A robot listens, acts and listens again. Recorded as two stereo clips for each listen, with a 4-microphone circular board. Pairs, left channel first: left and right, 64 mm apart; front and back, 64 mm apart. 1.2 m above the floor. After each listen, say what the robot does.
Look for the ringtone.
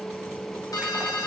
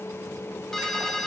Turn 85° left.
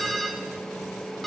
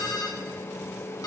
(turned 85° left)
Facing the ringtone, 1 to 2 m away.